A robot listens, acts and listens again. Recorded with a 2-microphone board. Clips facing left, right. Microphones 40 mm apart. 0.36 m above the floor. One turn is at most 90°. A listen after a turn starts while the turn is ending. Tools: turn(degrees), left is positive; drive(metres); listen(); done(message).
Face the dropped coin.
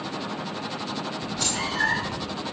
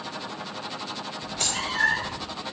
turn(degrees=-60)
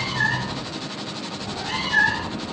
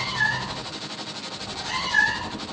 listen()
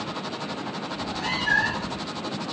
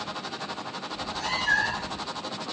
done("I heard a dropped coin, but can't make it out now. It was about straight ahead or 60° right.")